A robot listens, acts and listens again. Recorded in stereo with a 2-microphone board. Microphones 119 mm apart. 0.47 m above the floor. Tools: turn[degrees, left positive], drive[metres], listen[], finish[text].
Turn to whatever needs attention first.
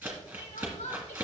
Thought: The crying: about 75° left or 105° left.
Action: turn[75]
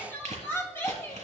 Thought: So it is at 20° left.
Action: turn[20]
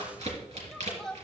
Action: finish[Facing the crying.]